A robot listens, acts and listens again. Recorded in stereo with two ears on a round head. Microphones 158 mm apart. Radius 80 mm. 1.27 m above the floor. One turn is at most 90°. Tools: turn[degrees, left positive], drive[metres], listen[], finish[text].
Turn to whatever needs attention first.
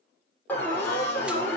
Action: turn[30]
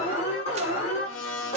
Thought: So it is at 140° left.
Action: turn[90]
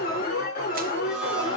Thought: The alarm is now 55° left.
Action: turn[55]
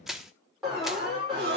Action: finish[Found it: an alarm, straight ahead.]